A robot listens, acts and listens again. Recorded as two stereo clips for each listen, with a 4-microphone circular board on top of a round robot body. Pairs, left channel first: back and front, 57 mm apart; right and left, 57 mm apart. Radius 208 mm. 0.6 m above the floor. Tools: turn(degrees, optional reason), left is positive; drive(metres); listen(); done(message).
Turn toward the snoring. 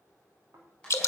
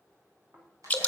turn(degrees=35, reason="The snoring: 35° left.")
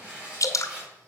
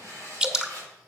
listen()
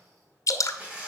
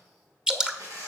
listen()
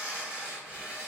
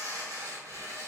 done("Facing where the snoring came from. I can't hear it now.")